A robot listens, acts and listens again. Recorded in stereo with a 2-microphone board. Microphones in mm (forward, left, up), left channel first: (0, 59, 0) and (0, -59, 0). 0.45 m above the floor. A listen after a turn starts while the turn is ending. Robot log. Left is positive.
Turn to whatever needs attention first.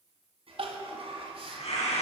note: The crying: about 55° right or 125° right.
cmd yaw -55
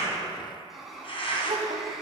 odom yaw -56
note: So it is at 70° right.
cmd yaw -70
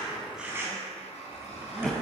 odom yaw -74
end: Found it: crying, straight ahead, 1 to 2 m away.